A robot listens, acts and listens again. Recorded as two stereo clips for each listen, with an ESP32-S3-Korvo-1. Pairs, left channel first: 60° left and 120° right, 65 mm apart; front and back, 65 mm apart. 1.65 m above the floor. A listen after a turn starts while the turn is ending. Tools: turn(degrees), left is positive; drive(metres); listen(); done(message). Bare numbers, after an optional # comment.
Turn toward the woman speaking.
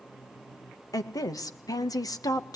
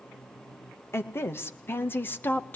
# The woman speaking: 60° left.
turn(60)
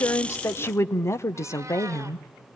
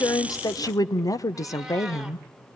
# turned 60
# The woman speaking is now 35° left.
turn(35)
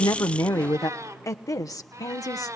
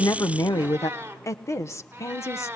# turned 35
# The woman speaking is now 40° left.
turn(40)
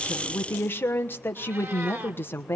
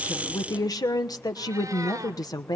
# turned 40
done("Facing the woman speaking.")